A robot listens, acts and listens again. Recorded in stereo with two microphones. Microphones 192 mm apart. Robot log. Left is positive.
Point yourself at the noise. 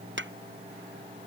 cmd yaw -90
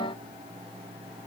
end: Facing where the pop came from. I can't hear it now.